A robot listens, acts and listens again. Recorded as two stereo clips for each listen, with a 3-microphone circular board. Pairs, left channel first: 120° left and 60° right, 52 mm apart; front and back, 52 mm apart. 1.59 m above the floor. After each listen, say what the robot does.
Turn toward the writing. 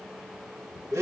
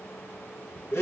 Keep listening.
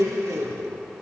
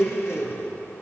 Keep listening.
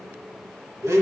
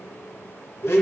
I can't make out writing, only a blender.